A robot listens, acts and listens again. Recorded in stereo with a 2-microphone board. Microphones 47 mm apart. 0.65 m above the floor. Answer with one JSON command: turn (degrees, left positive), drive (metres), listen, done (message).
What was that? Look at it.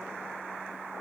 {"listen": true}
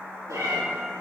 {"turn": -90}
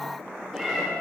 {"turn": -10}
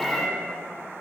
{"done": "Facing the cat meowing."}